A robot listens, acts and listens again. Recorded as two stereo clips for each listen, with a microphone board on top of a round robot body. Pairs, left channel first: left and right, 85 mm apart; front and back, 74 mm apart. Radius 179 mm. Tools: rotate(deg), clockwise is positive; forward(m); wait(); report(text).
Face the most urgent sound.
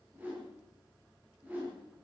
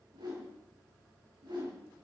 wait()
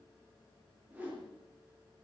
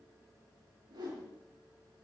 wait()
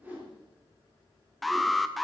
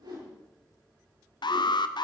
report("Facing the alarm.")